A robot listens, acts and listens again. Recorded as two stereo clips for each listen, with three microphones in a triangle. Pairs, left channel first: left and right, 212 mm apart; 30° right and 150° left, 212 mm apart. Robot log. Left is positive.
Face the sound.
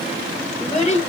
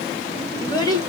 note: The child speaking: 40° left.
cmd yaw +40
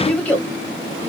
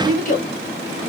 note: The child speaking is now 10° left.
cmd yaw +10
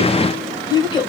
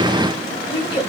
note: The child speaking is now 30° left.
cmd yaw +30
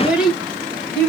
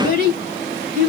end: Facing the child speaking.